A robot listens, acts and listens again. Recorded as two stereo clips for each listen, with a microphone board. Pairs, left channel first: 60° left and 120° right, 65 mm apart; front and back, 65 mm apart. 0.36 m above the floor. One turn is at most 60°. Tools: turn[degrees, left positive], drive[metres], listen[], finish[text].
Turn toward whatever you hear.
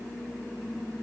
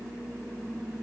Action: listen[]
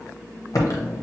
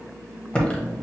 Thought: The typing on a keyboard: 70° left.
Action: turn[60]
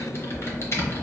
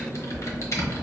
Thought: The typing on a keyboard is now 25° left.
Action: turn[25]
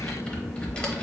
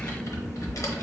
Thought: The typing on a keyboard is now 10° right.
Action: turn[-10]
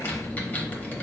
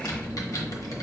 Action: finish[Found it: typing on a keyboard, straight ahead.]